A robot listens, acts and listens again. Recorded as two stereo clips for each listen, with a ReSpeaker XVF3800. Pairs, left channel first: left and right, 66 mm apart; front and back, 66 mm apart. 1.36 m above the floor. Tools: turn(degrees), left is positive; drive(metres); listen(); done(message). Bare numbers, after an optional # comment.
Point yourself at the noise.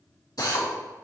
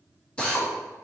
# The drill: 75° left.
turn(75)
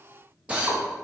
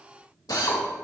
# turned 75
# The drill is now 20° right.
turn(-20)
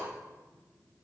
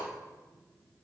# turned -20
listen()
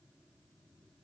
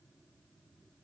listen()
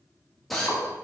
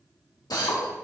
done("Found it: a drill, straight ahead, 1 to 2 m away.")